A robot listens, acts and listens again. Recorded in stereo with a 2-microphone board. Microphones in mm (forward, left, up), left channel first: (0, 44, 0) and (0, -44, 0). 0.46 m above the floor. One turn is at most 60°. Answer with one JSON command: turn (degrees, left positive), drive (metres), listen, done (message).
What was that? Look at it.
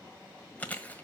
{"turn": 20}
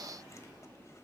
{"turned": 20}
{"listen": true}
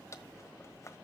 {"turn": 60}
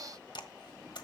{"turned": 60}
{"turn": 60}
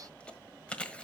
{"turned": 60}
{"turn": 15}
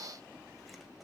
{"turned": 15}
{"listen": true}
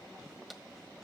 {"done": "Facing the chewing."}